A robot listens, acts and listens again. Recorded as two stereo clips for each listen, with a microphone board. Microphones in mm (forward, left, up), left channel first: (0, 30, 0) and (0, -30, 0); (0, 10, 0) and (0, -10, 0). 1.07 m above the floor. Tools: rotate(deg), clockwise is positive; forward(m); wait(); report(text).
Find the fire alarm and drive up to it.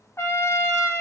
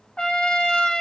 wait()
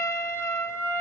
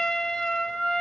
wait()
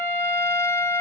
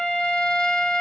report("I can't make out a fire alarm to turn to.")